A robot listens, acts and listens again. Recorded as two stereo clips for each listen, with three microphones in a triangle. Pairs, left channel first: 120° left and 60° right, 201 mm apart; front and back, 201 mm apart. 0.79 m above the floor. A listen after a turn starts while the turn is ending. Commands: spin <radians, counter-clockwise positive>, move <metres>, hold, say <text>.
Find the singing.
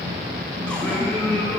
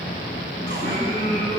spin 0.79
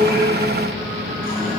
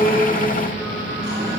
hold
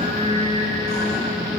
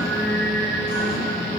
say Found it: singing, straight ahead.